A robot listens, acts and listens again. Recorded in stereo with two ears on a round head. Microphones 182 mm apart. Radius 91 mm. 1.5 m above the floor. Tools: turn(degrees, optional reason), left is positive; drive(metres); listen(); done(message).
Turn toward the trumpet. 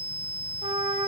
turn(degrees=-30, reason="The trumpet: about 30° right or 150° right.")
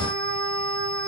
turn(degrees=-120, reason="So it is at 120° right.")
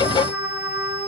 turn(degrees=-10, reason="The trumpet is now 10° right.")
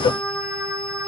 done("Facing the trumpet, over 4 m away.")